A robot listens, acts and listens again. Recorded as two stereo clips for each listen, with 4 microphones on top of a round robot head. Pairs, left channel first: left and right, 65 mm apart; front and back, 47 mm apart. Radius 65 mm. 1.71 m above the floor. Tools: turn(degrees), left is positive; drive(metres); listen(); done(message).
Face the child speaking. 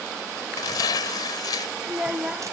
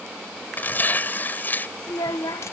turn(degrees=-10)
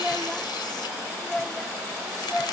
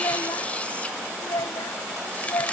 done("Facing the child speaking.")